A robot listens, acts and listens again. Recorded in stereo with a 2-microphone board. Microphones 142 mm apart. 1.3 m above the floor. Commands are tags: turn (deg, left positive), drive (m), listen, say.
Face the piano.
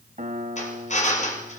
<turn deg="-60"/>
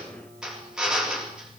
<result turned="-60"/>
<listen/>
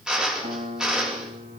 <turn deg="-55"/>
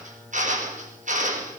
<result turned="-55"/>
<listen/>
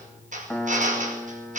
<say>Found it: a piano, straight ahead.</say>